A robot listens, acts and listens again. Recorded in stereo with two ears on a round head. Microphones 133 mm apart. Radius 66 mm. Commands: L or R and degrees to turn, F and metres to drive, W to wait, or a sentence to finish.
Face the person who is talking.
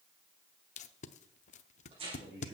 R70
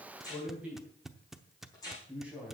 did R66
R10
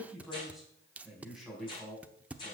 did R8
Facing the man speaking.